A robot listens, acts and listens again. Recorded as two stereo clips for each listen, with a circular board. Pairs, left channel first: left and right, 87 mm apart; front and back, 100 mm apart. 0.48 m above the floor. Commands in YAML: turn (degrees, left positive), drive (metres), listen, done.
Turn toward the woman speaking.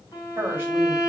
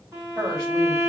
turn: -155
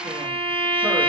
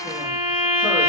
listen: true
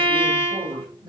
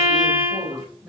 turn: -95
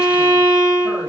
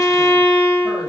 listen: true
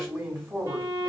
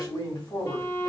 turn: -30
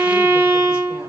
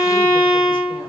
listen: true
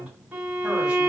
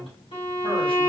listen: true
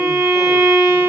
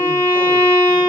done: "I heard a woman speaking from this way, but can't make it out now."